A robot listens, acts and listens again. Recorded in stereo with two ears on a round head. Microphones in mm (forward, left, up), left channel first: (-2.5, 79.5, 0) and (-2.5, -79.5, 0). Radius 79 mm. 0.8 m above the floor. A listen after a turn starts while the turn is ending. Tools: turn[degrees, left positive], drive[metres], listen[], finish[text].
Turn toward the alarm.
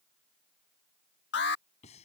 Thought: The alarm: about 75° left or 105° left.
Action: turn[75]
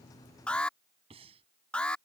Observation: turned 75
Action: finish[Facing the alarm.]